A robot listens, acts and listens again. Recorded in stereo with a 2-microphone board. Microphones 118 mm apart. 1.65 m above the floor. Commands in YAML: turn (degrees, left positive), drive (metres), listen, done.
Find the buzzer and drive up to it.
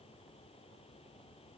listen: true
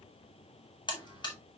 turn: 40
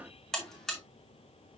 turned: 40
drive: 1.0
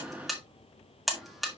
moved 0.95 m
drive: 1.0
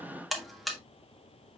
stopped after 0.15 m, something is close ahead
done: "Arrived at the buzzer, straight ahead."